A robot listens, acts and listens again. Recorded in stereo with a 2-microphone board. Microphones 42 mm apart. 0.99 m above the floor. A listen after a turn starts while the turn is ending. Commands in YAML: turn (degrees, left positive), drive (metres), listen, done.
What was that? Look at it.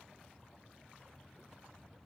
listen: true
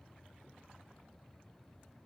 listen: true
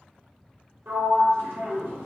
turn: -65
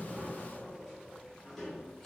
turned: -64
done: "Facing the sliding door."